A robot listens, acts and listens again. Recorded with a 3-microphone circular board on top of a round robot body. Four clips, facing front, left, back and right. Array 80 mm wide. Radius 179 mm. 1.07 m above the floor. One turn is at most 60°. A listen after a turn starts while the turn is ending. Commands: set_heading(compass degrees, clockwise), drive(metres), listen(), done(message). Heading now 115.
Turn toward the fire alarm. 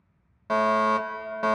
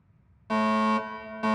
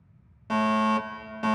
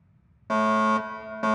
set_heading(155)
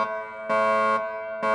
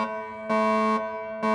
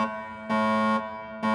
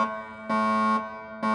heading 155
done("Found it: a fire alarm, straight ahead, 2 to 4 m away.")